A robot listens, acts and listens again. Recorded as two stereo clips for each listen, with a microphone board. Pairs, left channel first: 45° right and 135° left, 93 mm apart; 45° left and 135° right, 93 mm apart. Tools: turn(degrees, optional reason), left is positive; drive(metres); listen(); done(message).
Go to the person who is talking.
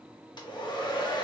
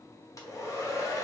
listen()
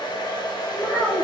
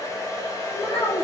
turn(degrees=35, reason="The child speaking: 35° left.")
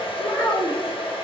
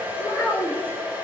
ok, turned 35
turn(degrees=-20, reason="The child speaking is now 20° right.")
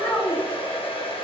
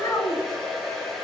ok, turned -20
drive(metres=1.0)
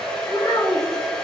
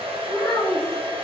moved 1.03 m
drive(metres=1.0)
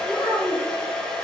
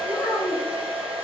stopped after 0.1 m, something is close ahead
done("Arrived at the child speaking, straight ahead.")